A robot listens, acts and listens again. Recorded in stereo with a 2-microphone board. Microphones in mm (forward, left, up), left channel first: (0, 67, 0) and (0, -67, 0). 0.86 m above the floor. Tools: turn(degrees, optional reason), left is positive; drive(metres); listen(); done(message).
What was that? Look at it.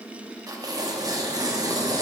turn(degrees=-30, reason="The tearing paper: about 30° right or 150° right.")
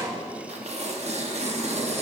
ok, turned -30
turn(degrees=-120, reason="So it is at 120° right.")
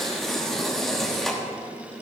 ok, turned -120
done("Found it: tearing paper, straight ahead.")